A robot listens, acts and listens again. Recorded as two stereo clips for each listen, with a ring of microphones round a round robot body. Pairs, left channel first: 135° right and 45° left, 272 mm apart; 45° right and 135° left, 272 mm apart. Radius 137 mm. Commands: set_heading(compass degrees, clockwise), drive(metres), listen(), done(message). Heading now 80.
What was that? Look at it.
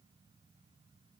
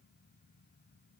listen()
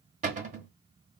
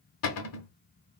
set_heading(100)
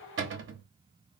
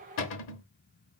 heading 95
done("Found it: a cupboard door, straight ahead, under 1 m away.")